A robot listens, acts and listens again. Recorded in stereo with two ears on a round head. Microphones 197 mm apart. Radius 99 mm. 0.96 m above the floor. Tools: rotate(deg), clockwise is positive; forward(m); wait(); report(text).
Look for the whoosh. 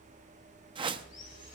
rotate(20)
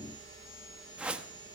report("Found it: a whoosh, straight ahead.")